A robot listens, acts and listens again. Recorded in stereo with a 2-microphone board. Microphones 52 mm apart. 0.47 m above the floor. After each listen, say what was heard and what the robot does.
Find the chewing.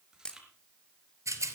Turn 30° right.
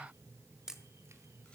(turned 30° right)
Keep listening.
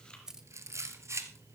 So it is at 20° left. Turn 20° left.
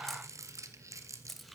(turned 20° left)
Keep listening.
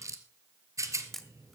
Keep listening.
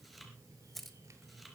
Facing the chewing, 2 to 4 m away.